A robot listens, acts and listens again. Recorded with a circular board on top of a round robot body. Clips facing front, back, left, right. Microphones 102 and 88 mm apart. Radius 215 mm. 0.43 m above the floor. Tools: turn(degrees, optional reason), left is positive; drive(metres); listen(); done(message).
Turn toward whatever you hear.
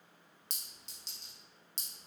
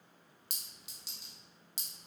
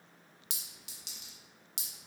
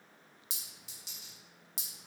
turn(degrees=100, reason="The clink: 100° left.")
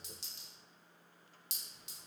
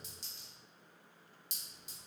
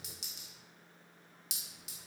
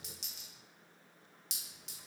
done("Facing the clink.")